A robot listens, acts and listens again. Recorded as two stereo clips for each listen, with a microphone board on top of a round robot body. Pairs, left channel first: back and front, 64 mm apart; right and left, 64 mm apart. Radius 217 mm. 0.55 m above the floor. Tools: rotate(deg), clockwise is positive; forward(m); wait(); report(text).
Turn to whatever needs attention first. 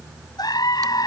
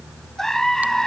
rotate(175)
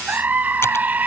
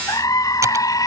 rotate(65)
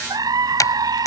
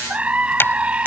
rotate(-20)
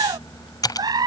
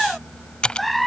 report("Found it: a scream, straight ahead.")